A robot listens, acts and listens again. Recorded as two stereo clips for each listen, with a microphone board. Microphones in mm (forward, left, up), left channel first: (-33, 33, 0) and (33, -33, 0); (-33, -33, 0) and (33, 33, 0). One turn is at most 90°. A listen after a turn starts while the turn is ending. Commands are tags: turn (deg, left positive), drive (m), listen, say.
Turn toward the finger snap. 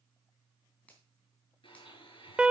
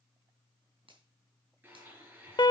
<turn deg="60"/>
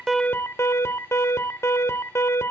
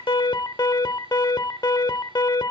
<listen/>
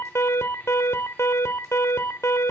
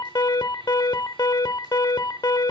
<listen/>
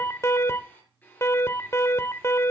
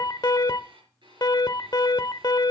<say>I heard a finger snap from this way, but can't make it out now.</say>